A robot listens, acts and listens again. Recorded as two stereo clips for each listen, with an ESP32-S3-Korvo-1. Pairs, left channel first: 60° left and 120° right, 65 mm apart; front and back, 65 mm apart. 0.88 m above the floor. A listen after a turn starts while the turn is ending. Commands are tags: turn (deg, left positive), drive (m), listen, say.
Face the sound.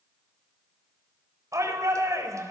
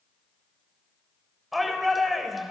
<turn deg="-90"/>
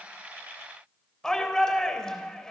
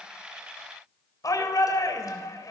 <turn deg="-20"/>
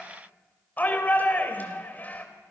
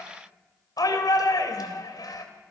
<say>Facing the shout, over 4 m away.</say>